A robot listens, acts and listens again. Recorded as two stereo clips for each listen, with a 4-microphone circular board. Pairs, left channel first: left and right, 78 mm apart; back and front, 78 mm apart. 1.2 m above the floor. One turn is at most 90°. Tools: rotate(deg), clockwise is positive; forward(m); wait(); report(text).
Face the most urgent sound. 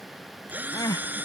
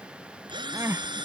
rotate(-55)
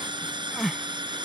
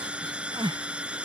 report("Found it: crying, straight ahead.")